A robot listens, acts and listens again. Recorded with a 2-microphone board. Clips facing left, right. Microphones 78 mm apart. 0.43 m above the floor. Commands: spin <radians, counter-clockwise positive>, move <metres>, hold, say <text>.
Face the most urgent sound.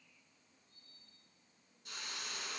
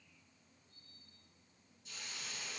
hold
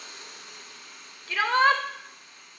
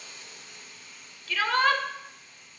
spin 0.44
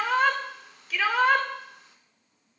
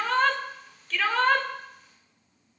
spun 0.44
say Found it: a shout, straight ahead.